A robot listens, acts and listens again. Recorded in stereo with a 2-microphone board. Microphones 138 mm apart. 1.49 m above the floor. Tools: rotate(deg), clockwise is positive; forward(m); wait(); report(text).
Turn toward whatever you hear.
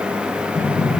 rotate(-75)
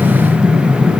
report("Facing the breathing, over 4 m away.")